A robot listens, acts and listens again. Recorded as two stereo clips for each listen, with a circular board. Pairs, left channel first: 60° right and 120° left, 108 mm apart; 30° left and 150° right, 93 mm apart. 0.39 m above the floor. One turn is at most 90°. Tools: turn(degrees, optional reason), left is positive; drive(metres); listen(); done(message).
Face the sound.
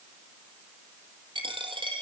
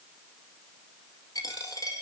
turn(degrees=80, reason="The dropped coin: 80° left.")
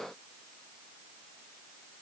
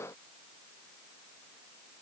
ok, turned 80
done("I heard a dropped coin from this way, but can't make it out now.")